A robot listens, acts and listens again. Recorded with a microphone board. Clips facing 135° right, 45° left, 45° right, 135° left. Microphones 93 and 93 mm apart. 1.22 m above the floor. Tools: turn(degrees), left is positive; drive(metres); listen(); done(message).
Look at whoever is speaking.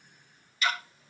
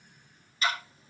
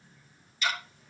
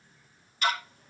listen()
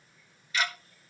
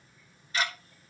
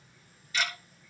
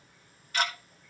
listen()
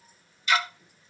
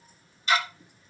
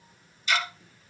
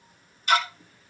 done("I can't make out anyone speaking, only ticking.")